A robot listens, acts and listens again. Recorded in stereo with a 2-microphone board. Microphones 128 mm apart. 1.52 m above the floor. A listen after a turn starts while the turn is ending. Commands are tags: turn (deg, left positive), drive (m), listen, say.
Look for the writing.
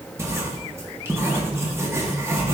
<turn deg="-20"/>
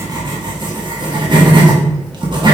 <turn deg="-140"/>
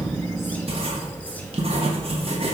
<turn deg="-50"/>
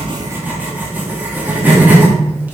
<turn deg="-15"/>
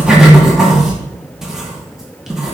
<say>Found it: writing, straight ahead.</say>